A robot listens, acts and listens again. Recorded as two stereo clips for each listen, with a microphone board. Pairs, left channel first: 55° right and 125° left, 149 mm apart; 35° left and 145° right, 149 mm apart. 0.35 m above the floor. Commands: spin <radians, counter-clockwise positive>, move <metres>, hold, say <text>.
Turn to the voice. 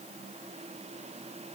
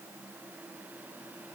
hold
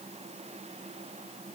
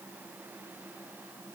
hold
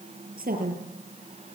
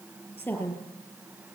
spin 1.92
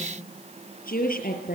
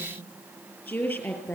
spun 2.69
spin -0.79
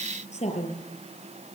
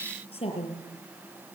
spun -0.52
spin -0.26
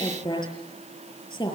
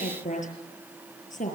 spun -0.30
say Found it: a woman speaking, straight ahead, over 4 m away.